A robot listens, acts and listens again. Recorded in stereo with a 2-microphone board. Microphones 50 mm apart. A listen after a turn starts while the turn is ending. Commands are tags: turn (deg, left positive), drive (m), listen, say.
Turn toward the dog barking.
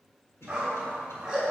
<turn deg="-30"/>
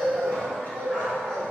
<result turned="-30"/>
<turn deg="30"/>
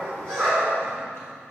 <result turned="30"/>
<say>Found it: a dog barking, straight ahead.</say>